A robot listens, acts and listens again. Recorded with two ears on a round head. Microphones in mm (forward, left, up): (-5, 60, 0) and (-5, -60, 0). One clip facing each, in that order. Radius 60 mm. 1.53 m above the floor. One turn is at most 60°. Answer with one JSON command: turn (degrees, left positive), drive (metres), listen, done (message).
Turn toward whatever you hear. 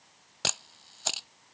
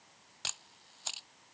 {"turn": 60}
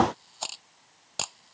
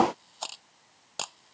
{"done": "Found it: a camera shutter, straight ahead."}